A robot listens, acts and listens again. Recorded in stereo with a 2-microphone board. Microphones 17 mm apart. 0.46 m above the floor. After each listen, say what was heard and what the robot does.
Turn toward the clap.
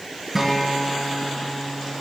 Keep listening.
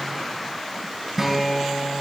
Keep listening.
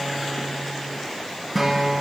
I can't make out a clap to turn to.